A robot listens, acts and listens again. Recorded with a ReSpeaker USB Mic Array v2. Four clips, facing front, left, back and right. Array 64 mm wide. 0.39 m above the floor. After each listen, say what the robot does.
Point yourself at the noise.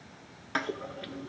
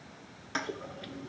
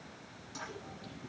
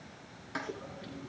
Turn 15° left.
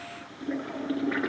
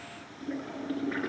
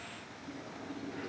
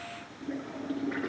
Found it: a toilet flushing, straight ahead.